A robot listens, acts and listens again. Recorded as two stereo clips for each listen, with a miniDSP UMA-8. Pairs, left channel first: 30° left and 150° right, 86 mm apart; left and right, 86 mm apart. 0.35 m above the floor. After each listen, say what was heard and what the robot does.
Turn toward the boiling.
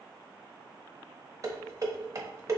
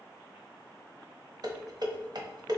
Keep listening.
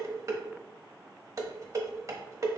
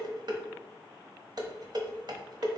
Keep listening.
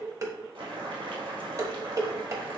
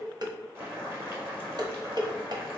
The boiling: 150° right. Turn 150° right.
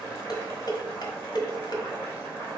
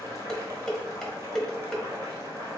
The boiling is now 30° right. Turn 30° right.
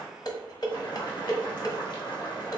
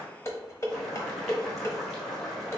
Found it: boiling, straight ahead.